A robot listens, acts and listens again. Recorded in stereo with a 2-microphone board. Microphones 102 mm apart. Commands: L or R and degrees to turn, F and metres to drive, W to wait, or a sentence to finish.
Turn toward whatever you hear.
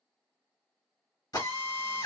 L35
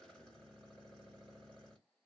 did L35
W
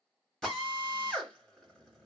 Found it: a drill, straight ahead.